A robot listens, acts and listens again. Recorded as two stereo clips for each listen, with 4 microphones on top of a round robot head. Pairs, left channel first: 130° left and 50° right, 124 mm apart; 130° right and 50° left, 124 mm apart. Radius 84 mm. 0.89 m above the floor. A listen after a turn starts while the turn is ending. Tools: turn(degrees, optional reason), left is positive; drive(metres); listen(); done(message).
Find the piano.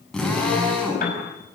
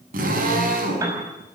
turn(degrees=120, reason="The piano: 120° left.")
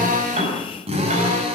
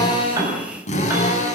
listen()
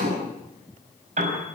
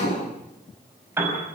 turn(degrees=-20, reason="The piano is now 20° right.")
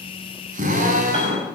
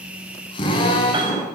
listen()
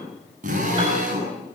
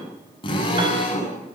listen()
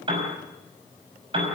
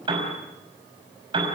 done("Found it: a piano, straight ahead.")